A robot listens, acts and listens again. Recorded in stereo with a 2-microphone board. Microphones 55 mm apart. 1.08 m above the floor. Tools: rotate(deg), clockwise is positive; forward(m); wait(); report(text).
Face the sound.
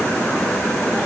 wait()
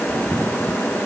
wait()
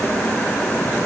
report("I can't make out anything to turn to.")